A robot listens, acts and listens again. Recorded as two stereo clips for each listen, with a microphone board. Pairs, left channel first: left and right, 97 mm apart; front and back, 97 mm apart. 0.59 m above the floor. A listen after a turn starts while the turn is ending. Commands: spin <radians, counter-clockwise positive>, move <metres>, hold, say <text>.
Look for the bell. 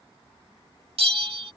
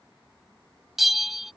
spin -1.66
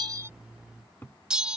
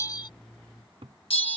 spin -0.17
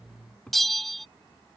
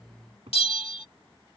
say Found it: a bell, straight ahead.